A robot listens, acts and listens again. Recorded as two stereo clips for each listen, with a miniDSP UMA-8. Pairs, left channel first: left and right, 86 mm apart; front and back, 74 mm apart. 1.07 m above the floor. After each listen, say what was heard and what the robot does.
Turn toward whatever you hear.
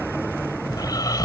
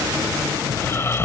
The snoring: 50° left. Turn 50° left.
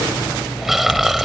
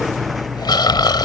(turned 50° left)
Found it: snoring, straight ahead.